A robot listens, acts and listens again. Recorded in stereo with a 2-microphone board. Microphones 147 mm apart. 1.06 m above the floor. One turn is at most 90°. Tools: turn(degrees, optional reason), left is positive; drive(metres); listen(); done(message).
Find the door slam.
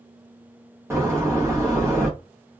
turn(degrees=-20, reason="The door slam: about 20° right or 160° right.")
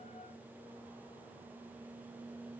listen()
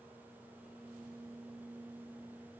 done("I heard a door slam, but can't make it out now. It was about straight ahead or 140° right.")